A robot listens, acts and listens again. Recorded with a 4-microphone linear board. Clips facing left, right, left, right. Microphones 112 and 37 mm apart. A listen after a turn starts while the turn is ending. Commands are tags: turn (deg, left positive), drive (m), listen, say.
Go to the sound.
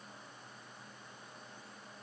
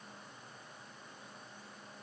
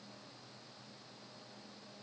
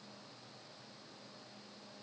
<listen/>
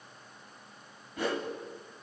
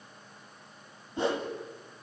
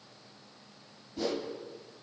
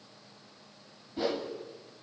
<turn deg="-25"/>
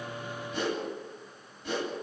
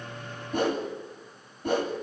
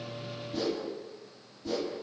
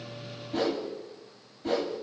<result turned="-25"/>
<turn deg="-130"/>
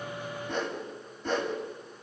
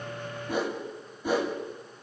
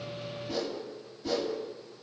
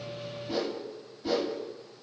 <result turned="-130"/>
<turn deg="-10"/>
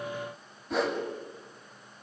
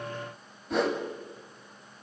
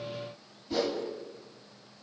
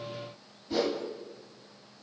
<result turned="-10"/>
<drive m="1.0"/>
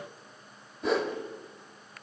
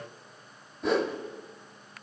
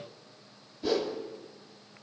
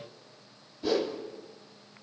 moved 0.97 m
<drive m="1.0"/>
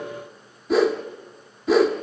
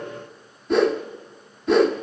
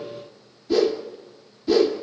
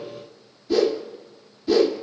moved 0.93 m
<drive m="1.0"/>
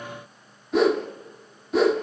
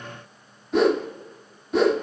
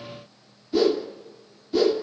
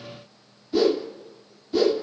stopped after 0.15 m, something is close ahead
<say>I am next to the whoosh.</say>